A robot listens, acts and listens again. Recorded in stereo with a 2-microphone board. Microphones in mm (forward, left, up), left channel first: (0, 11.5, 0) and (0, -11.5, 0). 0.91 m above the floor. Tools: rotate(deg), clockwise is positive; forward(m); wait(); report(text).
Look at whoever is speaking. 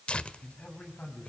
rotate(-60)
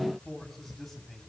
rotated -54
report("Facing the man speaking.")